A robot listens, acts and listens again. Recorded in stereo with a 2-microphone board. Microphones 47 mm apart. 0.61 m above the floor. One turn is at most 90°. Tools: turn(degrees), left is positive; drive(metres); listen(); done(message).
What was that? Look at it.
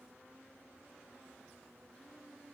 listen()
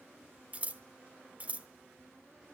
turn(degrees=-30)
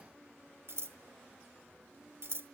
turn(degrees=-90)
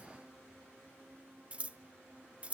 turn(degrees=-30)
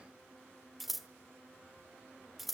done("Facing the scissors.")